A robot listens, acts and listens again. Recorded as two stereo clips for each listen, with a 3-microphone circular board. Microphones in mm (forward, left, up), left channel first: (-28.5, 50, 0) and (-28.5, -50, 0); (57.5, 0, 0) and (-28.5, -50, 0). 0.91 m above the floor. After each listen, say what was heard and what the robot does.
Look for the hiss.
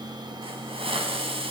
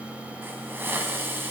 The hiss: 80° right. Turn 80° right.
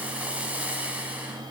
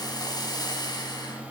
The hiss is now 15° right. Turn 15° right.
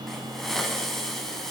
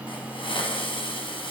Facing the hiss.